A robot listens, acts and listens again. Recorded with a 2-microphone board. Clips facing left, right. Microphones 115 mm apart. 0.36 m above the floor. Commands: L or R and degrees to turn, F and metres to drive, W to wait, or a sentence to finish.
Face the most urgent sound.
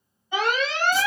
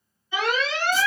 L55
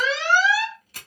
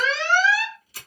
L15
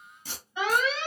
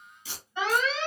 Found it: an alarm, straight ahead.